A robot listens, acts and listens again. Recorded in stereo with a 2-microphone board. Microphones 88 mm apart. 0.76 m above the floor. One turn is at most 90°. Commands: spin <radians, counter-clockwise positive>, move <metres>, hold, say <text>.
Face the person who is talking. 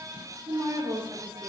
spin -1.22
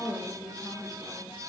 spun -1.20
spin -0.35
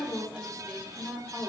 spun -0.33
spin -0.26
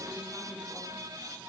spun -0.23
hold
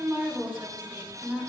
spin -0.35
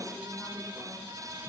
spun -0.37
hold
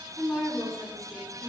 say Facing the woman speaking, 2 to 4 m away.